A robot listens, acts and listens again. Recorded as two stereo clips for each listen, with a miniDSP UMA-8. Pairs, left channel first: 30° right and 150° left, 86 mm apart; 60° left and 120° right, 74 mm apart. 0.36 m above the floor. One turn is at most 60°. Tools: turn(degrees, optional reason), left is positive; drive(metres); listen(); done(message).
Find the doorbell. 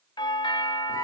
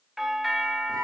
turn(degrees=-35, reason="The doorbell: 35° right.")
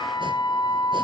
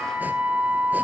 listen()
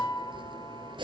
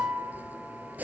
listen()
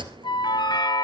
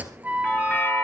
done("Found it: a doorbell, straight ahead.")